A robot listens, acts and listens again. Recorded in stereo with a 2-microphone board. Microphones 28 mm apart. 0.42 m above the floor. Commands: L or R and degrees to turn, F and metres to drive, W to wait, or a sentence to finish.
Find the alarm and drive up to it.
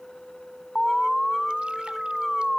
L30
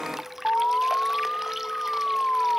L145
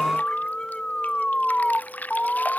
L35
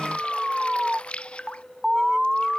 F1.0
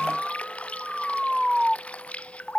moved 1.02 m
F1.0
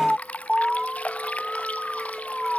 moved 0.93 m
F1.0
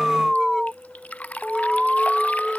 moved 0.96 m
F1.0
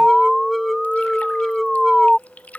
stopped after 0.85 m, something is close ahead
L10
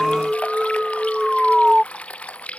I am next to the alarm.